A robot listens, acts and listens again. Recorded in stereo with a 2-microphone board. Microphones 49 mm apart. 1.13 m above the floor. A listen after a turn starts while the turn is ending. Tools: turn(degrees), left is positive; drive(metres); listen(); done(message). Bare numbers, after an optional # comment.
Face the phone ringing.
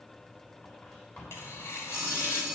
turn(-30)
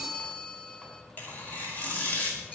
# So it is at 25° left.
turn(25)
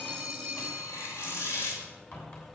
# The phone ringing is now 10° right.
turn(-10)
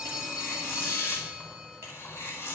done("Found it: a phone ringing, straight ahead.")